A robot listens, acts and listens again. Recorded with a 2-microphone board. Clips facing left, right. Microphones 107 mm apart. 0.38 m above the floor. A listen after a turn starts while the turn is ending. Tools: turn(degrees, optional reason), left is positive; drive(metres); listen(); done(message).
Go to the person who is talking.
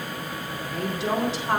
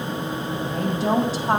turn(degrees=-40, reason="The woman speaking: about 40° right or 140° right.")
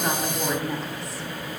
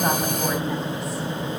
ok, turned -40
listen()
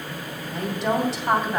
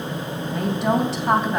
drive(metres=1.0)
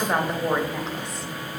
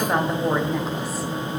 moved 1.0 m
drive(metres=1.0)
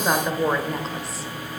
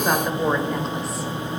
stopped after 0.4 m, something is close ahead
done("Arrived at the woman speaking, straight ahead.")